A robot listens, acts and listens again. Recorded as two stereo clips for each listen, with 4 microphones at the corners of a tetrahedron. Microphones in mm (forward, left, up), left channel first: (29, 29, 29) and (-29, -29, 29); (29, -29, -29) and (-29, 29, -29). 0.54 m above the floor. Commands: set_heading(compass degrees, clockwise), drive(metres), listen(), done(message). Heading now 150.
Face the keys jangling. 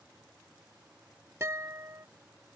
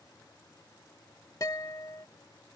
listen()
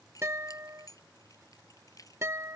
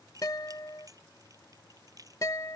set_heading(60)
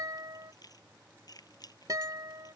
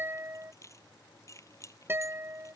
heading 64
done("Facing the keys jangling.")